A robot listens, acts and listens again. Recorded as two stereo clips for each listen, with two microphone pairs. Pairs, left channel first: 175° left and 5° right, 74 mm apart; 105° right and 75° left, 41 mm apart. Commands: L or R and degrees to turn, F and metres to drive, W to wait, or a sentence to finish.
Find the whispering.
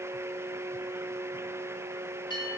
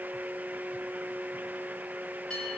W
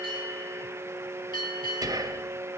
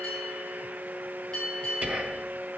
L25
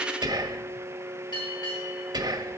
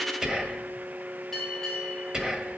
Found it: whispering, straight ahead, 1 to 2 m away.